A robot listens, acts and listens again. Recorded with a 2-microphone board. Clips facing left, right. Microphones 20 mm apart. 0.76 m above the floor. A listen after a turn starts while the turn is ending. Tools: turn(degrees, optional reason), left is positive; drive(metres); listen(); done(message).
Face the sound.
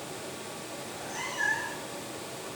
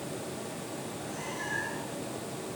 turn(degrees=45, reason="The cat meowing: about 45° left or 135° left.")
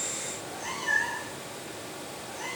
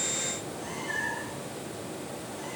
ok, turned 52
turn(degrees=80, reason="So it is at 80° left.")
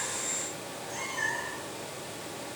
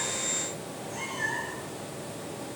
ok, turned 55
turn(degrees=25, reason="The cat meowing is now 25° left.")
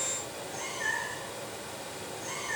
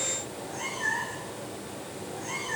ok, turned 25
done("Found it: a cat meowing, straight ahead, over 4 m away.")